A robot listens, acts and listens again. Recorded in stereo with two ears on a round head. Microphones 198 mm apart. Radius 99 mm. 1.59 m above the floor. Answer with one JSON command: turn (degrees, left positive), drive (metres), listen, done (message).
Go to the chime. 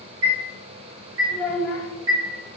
{"turn": -55}
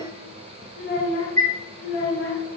{"turn": -50}
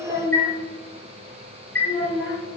{"drive": 1.0}
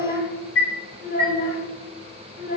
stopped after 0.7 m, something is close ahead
{"turn": 10}
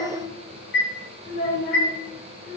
{"done": "I am next to the chime."}